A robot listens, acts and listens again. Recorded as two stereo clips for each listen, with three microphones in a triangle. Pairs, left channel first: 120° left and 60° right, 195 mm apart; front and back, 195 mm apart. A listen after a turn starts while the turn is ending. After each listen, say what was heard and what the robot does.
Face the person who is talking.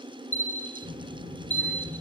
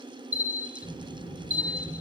The child speaking: 65° right. Turn 65° right.
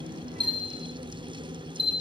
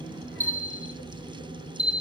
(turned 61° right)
Found it: a child speaking, straight ahead, over 4 m away.